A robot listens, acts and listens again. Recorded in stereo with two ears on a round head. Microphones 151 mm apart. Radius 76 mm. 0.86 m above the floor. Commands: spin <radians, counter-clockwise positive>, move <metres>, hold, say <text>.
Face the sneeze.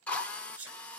spin -0.44
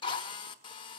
hold
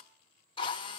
say I heard a sneeze, but can't make it out now. It was about straight ahead or 130° right.